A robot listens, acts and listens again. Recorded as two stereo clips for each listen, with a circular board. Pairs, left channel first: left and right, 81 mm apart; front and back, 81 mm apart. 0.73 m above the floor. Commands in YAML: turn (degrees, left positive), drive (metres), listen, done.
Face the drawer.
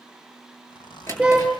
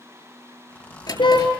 turn: 35
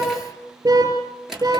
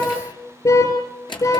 done: "Facing the drawer."